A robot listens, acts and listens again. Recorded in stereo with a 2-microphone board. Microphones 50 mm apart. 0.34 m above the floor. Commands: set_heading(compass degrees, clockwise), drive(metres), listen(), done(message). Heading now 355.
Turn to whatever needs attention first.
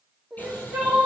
set_heading(25)
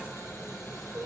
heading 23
set_heading(168)
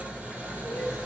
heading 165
listen()
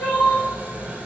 done("Found it: crying, straight ahead.")